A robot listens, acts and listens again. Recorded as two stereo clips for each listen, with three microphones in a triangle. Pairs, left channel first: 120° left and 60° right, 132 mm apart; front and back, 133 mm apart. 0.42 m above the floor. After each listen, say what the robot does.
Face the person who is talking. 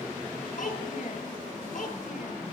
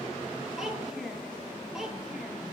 Turn 95° left.
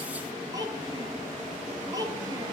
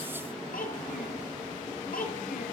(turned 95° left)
Facing the child speaking, over 4 m away.